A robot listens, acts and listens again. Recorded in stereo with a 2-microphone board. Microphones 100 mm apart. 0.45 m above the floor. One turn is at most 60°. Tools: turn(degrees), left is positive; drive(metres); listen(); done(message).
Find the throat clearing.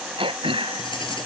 turn(degrees=-60)
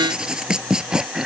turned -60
done("Facing the throat clearing.")